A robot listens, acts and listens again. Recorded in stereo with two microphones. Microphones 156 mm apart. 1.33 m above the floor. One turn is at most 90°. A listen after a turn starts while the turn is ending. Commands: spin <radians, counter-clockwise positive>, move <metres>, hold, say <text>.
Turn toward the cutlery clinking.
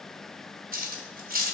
spin -1.22
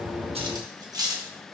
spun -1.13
spin -0.44
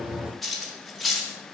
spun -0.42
say Facing the cutlery clinking, 1 to 2 m away.